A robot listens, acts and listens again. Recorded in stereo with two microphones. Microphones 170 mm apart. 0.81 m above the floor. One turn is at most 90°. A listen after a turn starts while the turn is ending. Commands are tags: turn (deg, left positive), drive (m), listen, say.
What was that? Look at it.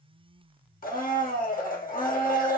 <turn deg="55"/>
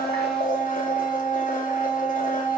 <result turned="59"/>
<turn deg="55"/>
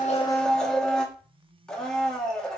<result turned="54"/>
<say>Facing the blender, 1 to 2 m away.</say>